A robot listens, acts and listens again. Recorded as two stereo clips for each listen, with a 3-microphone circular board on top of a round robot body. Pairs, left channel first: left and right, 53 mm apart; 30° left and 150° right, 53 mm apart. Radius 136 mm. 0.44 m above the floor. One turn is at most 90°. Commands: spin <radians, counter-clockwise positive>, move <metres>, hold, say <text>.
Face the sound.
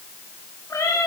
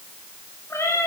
spin 1.22
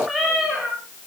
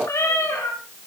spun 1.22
say Facing the cat meowing.